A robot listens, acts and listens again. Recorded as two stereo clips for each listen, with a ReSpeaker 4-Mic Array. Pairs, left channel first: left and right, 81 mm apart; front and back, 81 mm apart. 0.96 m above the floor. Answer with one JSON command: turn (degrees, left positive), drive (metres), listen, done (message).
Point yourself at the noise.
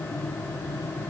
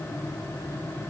{"listen": true}
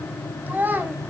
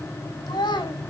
{"turn": -25}
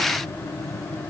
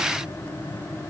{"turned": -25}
{"listen": true}
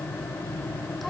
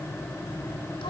{"listen": true}
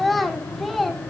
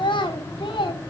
{"done": "Found it: a child speaking, straight ahead."}